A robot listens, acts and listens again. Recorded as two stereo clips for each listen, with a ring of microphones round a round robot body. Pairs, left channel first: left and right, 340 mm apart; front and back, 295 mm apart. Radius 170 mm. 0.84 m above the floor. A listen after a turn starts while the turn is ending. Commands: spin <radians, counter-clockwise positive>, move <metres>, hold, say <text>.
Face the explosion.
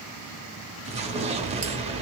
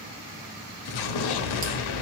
spin -0.26
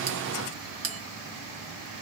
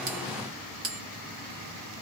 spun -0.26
say I heard an explosion from this way, but can't make it out now.